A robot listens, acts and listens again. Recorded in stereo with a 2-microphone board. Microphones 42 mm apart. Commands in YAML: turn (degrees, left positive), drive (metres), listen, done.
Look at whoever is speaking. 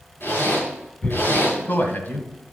turn: 50
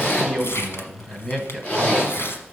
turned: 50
turn: 15
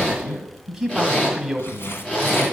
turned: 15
done: "Facing the man speaking, 1 to 2 m away."